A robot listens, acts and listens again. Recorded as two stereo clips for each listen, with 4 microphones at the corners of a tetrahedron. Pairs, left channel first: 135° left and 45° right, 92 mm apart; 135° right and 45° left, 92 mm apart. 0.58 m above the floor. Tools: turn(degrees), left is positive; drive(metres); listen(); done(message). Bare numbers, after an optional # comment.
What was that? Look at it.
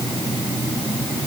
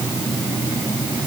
listen()
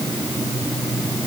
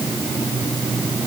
listen()
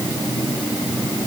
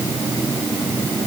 done("I can't make out anything.")